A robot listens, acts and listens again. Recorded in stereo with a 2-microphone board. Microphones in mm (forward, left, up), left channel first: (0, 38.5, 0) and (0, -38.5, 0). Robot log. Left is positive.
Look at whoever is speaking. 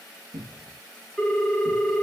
cmd idle
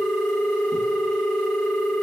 cmd idle
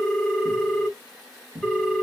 end: I can't make out anyone speaking to turn to.